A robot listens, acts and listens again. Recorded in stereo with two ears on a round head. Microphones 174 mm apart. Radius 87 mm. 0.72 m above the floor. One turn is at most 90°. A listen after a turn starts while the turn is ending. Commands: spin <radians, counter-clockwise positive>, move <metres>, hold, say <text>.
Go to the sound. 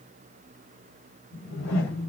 spin 1.22
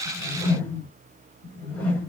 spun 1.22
spin 0.17
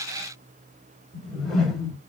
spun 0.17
move 1.0
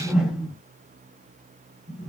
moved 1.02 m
move 1.0
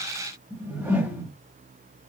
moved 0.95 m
spin -0.17
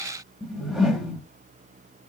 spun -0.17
move 1.0
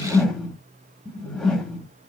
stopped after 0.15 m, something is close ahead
say Arrived at the whoosh, straight ahead.